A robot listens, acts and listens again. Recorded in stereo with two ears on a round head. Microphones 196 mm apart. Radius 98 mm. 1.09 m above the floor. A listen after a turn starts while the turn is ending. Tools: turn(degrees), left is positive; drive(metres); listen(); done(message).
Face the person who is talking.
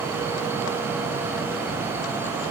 listen()
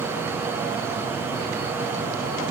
listen()
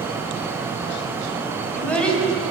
turn(degrees=30)
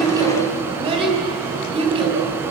turn(degrees=-25)
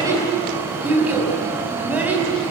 done("Found it: a child speaking, straight ahead, over 4 m away.")